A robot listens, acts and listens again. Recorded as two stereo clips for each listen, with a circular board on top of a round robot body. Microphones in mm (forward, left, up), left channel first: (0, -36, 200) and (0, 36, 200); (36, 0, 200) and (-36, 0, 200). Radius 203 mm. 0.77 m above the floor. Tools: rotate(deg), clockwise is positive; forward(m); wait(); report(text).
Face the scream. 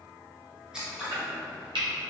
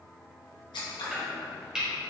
wait()
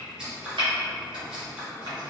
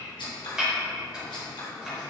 wait()
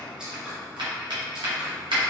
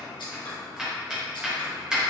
report("I can't make out a scream to turn to.")